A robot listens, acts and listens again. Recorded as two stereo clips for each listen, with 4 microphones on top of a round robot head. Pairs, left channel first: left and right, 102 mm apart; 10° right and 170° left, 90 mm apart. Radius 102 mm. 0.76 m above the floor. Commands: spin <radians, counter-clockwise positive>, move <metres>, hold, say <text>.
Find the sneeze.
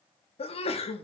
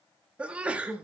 spin 1.66
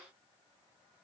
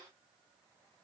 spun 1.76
say Facing where the sneeze came from. I can't hear it now.